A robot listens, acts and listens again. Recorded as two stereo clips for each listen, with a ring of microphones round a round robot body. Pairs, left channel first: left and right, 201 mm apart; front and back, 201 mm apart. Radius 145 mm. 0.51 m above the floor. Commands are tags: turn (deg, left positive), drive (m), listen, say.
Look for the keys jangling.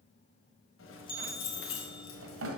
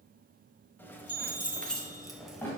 <turn deg="90"/>
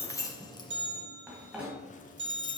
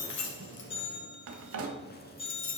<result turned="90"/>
<turn deg="45"/>
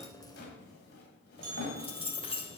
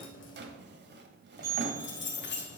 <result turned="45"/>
<turn deg="25"/>
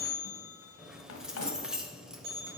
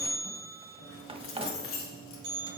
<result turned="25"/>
<say>Facing the keys jangling, 1 to 2 m away.</say>